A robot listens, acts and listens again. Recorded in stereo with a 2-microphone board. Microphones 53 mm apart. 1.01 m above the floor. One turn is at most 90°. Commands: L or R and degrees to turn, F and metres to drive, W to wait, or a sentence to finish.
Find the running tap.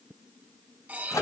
W
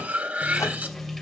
L30
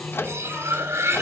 L90
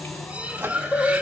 L50
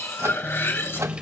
R25
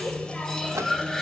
L15
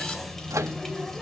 Found it: a running tap, straight ahead, 2 to 4 m away.